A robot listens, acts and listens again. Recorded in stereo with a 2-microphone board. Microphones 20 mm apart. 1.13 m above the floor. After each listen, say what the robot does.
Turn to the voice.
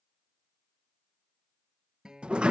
Keep listening.
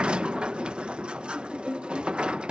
Keep listening.
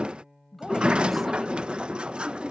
Turn 30° left.
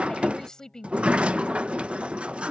Turn 145° left.
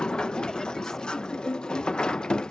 Keep listening.
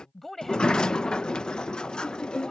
Turn 10° left.
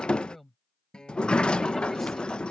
Facing the woman speaking.